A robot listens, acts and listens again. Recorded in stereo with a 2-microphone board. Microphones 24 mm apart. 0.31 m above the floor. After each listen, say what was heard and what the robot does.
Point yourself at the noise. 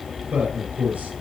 The man speaking: about 70° right or 110° right. Turn 70° right.
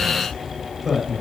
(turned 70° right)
Found it: a man speaking, straight ahead, over 4 m away.